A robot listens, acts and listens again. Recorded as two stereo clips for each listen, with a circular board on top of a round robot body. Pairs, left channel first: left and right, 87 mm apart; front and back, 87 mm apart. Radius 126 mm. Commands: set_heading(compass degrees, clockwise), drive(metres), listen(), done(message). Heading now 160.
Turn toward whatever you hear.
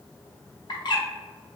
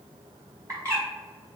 set_heading(35)
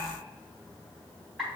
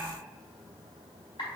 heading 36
done("Found it: a bird, straight ahead, 1 to 2 m away.")